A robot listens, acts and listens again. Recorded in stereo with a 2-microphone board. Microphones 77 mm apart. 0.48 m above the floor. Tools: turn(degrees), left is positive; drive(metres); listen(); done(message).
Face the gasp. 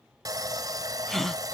turn(degrees=30)
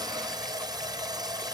listen()
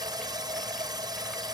done("I heard a gasp, but can't make it out now. It was about 25° right or 145° left.")